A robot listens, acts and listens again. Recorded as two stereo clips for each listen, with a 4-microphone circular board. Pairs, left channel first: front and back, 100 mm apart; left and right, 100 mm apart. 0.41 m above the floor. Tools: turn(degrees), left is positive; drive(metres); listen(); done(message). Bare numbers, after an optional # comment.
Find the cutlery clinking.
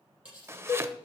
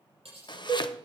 # The cutlery clinking: 100° right.
turn(-100)
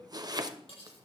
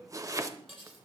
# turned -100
done("Found it: cutlery clinking, straight ahead, over 4 m away.")